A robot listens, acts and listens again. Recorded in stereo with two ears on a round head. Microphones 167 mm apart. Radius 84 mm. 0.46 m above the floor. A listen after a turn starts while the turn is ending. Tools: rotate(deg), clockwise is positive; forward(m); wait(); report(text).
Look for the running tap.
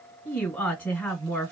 wait()
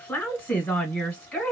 wait()
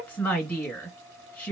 report("I can't make out a running tap to turn to.")